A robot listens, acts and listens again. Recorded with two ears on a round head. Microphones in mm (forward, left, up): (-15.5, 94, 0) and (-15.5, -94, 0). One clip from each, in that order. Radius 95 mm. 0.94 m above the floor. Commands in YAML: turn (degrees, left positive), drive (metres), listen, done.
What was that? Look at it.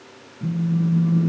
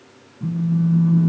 turn: -20
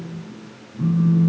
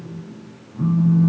turn: -140
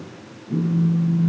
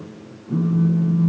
turn: -50
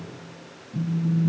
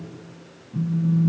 done: "Facing the phone buzzing, 2 to 4 m away."